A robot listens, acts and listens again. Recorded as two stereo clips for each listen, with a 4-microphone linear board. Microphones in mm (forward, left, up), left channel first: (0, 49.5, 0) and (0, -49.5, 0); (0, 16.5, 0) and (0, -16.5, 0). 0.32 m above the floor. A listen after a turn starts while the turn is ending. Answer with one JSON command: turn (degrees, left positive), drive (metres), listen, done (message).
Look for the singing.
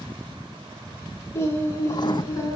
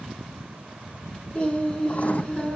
{"turn": 35}
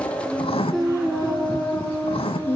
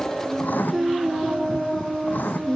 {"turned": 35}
{"turn": 20}
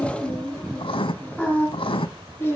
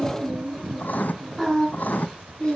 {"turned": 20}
{"turn": 25}
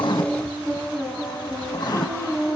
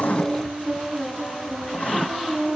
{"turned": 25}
{"turn": 10}
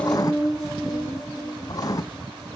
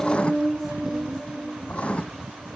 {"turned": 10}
{"done": "Facing the singing."}